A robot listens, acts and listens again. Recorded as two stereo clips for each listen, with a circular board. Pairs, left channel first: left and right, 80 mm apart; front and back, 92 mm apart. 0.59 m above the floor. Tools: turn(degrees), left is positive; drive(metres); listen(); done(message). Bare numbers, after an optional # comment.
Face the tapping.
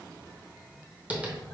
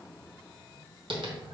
# The tapping: 160° right.
turn(-160)
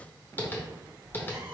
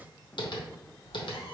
# The tapping is now 25° left.
turn(25)
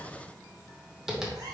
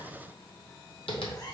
done("Found it: tapping, straight ahead.")